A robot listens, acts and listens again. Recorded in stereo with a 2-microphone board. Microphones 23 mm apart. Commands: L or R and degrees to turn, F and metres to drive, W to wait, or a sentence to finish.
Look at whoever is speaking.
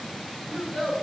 R30
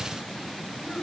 W
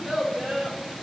R145
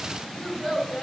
L10
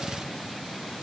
W
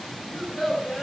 Facing the child speaking.